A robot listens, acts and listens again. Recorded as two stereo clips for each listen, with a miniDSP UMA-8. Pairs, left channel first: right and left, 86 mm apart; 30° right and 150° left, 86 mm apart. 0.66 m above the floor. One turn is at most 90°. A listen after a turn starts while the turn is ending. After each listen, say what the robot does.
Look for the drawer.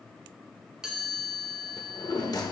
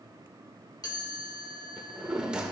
Turn 90° right.
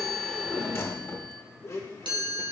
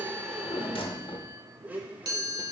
Turn 30° right.
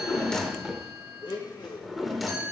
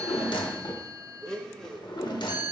Found it: a drawer, straight ahead, under 1 m away.